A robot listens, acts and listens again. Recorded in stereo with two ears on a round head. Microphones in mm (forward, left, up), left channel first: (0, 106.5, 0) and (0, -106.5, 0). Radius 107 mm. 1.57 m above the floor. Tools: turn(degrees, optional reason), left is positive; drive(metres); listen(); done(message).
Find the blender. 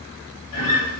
listen()
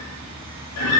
listen()
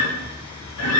done("I can't make out a blender, only a guitar.")